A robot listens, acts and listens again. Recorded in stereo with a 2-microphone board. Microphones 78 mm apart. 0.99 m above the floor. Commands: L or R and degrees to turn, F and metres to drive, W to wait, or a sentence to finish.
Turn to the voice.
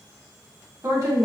R50
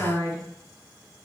R80
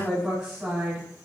R15
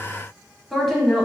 Found it: a woman speaking, straight ahead, 1 to 2 m away.